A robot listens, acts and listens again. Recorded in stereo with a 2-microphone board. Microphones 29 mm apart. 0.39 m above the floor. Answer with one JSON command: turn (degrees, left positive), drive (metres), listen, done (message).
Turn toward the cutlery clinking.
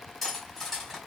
{"turn": 30}
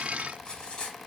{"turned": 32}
{"turn": 140}
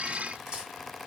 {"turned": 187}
{"turn": -50}
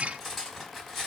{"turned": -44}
{"done": "Facing the cutlery clinking."}